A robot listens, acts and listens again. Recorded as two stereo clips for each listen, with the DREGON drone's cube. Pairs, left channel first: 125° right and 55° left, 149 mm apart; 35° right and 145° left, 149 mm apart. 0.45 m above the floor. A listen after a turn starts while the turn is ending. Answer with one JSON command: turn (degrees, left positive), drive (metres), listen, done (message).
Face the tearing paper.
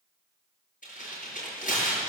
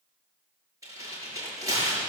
{"turn": -145}
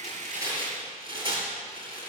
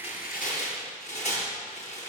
{"done": "Found it: tearing paper, straight ahead."}